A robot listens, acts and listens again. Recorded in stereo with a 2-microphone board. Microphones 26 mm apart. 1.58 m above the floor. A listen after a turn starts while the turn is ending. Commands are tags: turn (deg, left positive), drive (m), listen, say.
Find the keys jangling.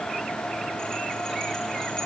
<listen/>
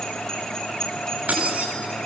<turn deg="-90"/>
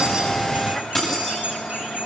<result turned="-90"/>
<turn deg="15"/>
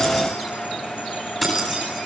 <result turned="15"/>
<say>Facing the keys jangling.</say>